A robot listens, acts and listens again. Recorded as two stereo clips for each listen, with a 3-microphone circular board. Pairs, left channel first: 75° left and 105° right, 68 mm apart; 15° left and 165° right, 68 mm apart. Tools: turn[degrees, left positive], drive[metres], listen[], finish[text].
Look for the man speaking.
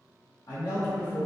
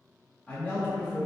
Thought: The man speaking: 80° left.
Action: turn[80]
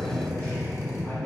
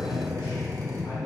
Thought: The man speaking is now 10° left.
Action: turn[10]
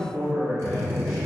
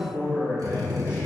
Thought: The man speaking is now 10° right.
Action: turn[-10]
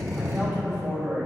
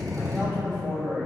Thought: The man speaking is now 30° right.
Action: turn[-30]
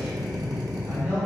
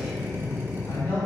Thought: The man speaking is now 15° right.
Action: turn[-15]
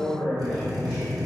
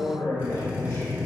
Action: finish[Found it: a man speaking, straight ahead.]